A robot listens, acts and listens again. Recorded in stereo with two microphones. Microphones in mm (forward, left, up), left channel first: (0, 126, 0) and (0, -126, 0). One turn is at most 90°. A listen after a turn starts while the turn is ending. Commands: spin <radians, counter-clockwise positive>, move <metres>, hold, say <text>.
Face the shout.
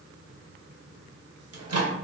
hold
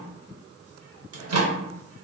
hold
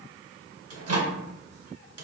say I can't make out a shout, only a microwave.